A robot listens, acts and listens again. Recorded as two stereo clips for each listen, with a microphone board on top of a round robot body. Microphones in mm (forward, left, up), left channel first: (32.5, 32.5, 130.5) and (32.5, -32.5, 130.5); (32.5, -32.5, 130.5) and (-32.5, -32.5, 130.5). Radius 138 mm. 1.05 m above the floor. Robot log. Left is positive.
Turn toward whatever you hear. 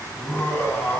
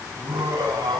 note: The laughter: 155° left.
cmd yaw +155
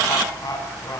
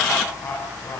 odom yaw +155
note: The laughter is now 55° left.
cmd yaw +55
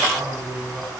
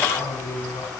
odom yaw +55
end: Facing the laughter, over 4 m away.